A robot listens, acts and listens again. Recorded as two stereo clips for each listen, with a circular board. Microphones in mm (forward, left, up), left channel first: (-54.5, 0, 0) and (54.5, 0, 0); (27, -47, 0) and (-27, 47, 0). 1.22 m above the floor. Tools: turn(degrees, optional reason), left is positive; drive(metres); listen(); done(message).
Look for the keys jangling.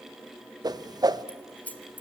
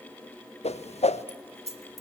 turn(degrees=105, reason="The keys jangling: 105° left.")
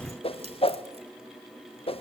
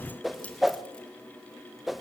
listen()
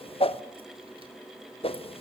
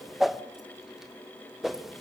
listen()
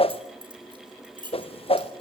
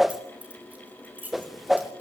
turn(degrees=45, reason="The keys jangling is now 45° left.")
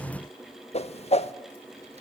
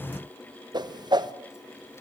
listen()
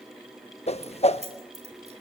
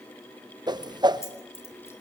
done("Facing the keys jangling, over 4 m away.")